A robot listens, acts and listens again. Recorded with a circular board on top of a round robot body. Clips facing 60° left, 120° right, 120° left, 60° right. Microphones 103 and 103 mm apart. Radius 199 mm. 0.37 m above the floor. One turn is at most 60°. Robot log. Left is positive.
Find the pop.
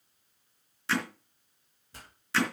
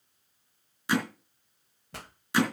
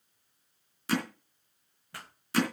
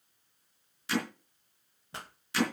note: The pop: 125° right.
cmd yaw -60
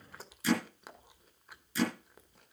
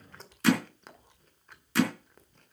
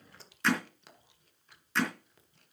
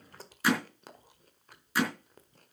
note: Nothing new. It was at 65° right.
cmd yaw -60
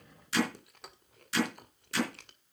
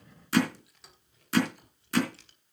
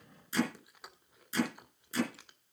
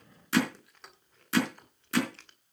end: Facing where the pop came from. I can't hear it now.